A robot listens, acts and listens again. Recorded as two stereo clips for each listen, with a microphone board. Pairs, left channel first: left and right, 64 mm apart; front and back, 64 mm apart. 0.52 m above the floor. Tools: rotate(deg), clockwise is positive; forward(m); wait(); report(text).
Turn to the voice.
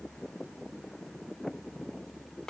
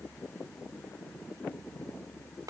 wait()
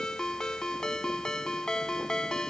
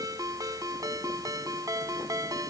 wait()
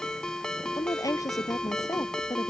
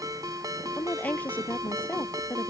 rotate(-65)
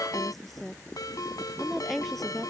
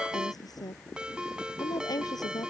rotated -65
report("Found it: a woman speaking, straight ahead.")